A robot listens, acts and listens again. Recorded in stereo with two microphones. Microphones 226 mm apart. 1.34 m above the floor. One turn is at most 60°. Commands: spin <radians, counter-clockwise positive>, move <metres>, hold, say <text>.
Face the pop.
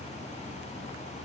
hold
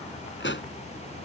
spin 0.96
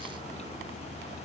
hold
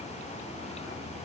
say I heard a pop, but can't make it out now. It was about straight ahead or 70° left.